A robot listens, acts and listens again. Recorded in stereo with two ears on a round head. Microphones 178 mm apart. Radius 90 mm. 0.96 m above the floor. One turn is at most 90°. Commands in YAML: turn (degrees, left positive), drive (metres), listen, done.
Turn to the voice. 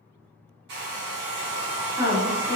turn: 30
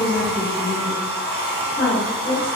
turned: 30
turn: 90
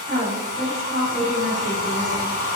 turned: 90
turn: 40
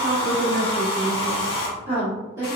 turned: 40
turn: -15
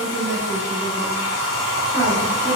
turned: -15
done: "Facing the woman speaking, 1 to 2 m away."